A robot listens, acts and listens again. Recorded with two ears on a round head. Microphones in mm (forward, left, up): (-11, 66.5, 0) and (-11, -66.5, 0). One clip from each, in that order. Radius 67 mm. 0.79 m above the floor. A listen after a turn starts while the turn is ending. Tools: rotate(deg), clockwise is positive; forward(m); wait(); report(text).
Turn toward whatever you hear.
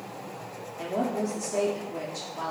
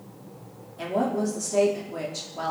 rotate(30)
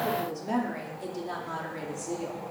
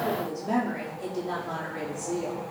rotate(-15)
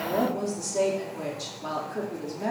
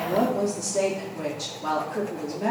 report("Found it: a woman speaking, straight ahead.")